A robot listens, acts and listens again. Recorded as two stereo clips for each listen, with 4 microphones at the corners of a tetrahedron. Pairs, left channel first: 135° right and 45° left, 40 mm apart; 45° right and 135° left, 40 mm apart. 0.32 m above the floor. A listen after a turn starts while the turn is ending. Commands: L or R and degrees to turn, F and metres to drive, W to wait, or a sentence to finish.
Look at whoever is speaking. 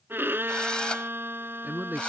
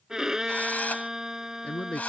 L10
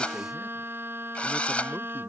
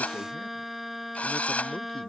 W
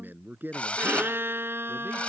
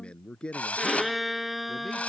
L15
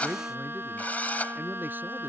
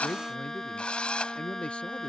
L15
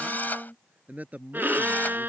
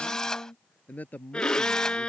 Found it: a man speaking, straight ahead.